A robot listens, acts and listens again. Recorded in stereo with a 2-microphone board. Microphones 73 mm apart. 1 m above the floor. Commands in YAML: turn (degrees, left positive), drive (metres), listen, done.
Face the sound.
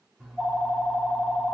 turn: -30
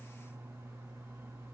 turn: -140
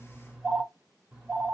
done: "Found it: a phone ringing, straight ahead."